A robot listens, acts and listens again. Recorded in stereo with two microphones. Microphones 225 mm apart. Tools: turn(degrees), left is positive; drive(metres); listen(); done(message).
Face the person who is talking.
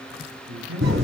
turn(degrees=-90)
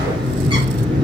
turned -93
listen()
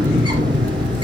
listen()
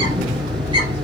done("Facing where the man speaking came from. I can't hear it now.")